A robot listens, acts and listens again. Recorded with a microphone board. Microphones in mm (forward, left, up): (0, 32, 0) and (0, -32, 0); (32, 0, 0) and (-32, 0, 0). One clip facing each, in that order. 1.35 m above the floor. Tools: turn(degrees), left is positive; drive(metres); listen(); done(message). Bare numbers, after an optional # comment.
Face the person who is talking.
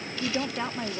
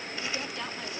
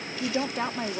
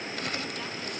# The woman speaking: 25° left.
turn(25)
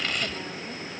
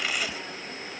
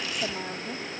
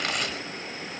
listen()
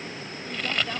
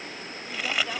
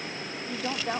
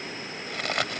listen()
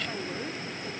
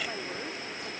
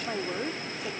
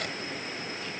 done("I heard a woman speaking from this way, but can't make it out now.")